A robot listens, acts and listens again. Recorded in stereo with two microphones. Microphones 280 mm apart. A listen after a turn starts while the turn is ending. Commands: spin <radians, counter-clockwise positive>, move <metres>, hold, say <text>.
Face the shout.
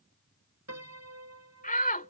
spin 0.52
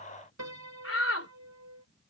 spin 2.09
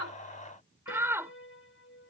spin -0.17
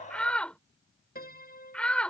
say Found it: a shout, straight ahead.